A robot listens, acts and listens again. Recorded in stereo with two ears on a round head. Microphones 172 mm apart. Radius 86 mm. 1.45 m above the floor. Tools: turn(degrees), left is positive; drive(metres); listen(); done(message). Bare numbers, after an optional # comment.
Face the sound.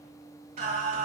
# The singing: about 35° right or 145° right.
turn(-35)
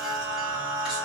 done("Found it: singing, straight ahead, 1 to 2 m away.")